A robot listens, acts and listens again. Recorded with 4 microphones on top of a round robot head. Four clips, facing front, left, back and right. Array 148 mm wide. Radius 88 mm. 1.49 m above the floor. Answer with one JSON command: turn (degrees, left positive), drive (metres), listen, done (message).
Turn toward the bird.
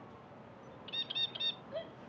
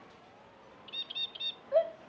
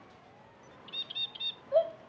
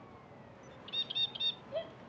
{"done": "Found it: a bird, straight ahead."}